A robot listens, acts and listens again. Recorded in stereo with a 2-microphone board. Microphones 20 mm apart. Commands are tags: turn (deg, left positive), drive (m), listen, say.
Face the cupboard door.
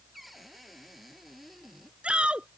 <turn deg="30"/>
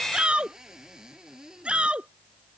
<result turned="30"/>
<turn deg="-30"/>
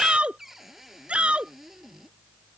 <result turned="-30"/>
<turn deg="-10"/>
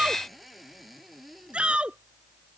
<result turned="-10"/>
<say>Found it: a cupboard door, straight ahead.</say>